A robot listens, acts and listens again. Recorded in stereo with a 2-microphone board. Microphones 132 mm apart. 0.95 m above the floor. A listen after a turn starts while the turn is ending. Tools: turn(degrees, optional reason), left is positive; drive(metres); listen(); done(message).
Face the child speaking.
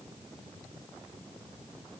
listen()
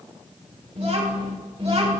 turn(degrees=-65, reason="The child speaking: about 65° right or 115° right.")
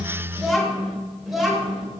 done("Facing the child speaking.")